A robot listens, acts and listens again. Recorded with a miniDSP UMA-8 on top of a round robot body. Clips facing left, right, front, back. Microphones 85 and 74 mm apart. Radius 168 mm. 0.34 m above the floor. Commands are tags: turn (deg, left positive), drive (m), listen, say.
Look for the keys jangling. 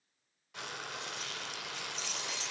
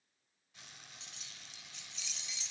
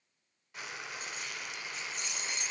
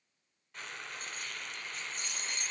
<turn deg="135"/>
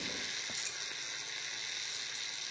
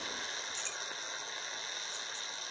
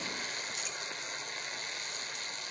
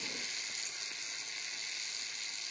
<turn deg="10"/>
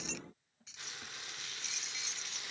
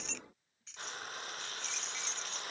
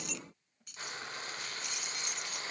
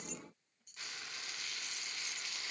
<say>Found it: keys jangling, straight ahead.</say>